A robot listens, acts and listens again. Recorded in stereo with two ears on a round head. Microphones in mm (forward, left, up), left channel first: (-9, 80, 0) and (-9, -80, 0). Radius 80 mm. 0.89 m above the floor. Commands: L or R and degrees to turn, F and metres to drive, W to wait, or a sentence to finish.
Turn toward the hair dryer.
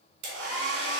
R70
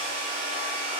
R35
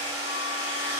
R15
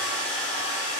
Found it: a hair dryer, straight ahead, 2 to 4 m away.